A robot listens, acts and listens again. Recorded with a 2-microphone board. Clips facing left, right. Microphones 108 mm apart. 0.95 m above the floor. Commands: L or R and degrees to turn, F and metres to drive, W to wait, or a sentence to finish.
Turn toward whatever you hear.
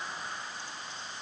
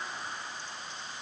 W
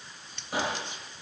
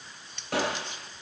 R90
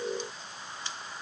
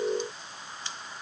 I heard a gunshot from this way, but can't make it out now.